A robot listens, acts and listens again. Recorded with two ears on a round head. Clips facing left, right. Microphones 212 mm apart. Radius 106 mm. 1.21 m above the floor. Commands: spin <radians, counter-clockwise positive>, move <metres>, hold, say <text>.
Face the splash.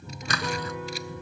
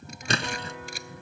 spin -0.44
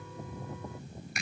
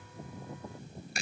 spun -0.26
hold
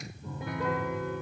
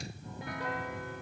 say I heard a splash, but can't make it out now. It was about 10° right or 140° right.